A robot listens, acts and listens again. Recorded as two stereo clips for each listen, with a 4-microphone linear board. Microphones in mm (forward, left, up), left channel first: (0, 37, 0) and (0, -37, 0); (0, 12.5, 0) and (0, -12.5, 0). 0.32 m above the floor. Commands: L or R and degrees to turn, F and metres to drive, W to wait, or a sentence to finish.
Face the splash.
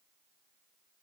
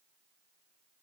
W
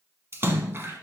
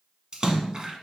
R35
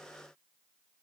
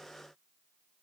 W
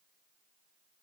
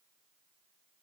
I heard a splash, but can't make it out now. It was about straight ahead or 110° right.